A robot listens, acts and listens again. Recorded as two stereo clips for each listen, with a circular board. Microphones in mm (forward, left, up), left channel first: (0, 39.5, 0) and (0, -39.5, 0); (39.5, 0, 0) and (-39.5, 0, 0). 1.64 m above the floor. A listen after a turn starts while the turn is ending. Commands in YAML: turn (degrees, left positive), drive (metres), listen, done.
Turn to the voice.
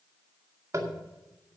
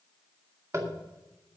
listen: true
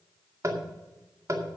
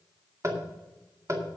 listen: true
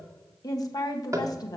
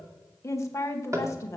turn: 55
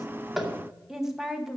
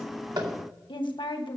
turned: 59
done: "Facing the woman speaking, 1 to 2 m away."